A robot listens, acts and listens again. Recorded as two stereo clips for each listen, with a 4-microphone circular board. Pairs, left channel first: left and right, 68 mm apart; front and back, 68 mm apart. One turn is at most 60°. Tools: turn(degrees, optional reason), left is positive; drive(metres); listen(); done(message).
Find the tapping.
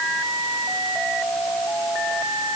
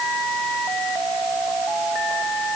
listen()
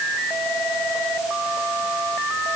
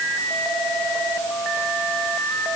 listen()
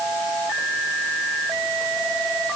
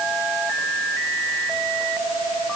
done("I can't make out tapping.")